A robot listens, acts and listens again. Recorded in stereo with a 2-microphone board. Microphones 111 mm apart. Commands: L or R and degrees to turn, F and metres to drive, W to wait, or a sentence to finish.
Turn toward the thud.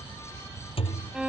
L60
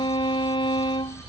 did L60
W
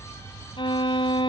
I heard a thud, but can't make it out now. It was about straight ahead or 60° left.